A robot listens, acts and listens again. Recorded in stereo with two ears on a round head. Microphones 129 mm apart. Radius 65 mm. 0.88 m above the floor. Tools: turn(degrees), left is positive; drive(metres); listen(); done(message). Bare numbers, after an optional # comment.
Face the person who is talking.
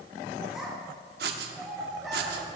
turn(30)
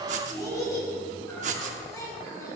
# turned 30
# So it is at 155° left.
turn(155)
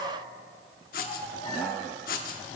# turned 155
listen()
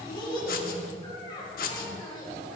# The child speaking is now 30° left.
turn(30)
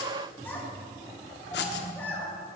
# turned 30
# The child speaking is now 15° left.
turn(15)
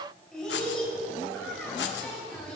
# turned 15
done("Facing the child speaking, 2 to 4 m away.")